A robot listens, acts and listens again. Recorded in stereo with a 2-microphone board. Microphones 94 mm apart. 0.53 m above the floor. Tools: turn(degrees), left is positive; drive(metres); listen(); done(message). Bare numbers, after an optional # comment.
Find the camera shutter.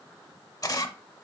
# The camera shutter: about 40° left or 140° left.
turn(40)
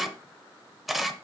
done("Facing the camera shutter.")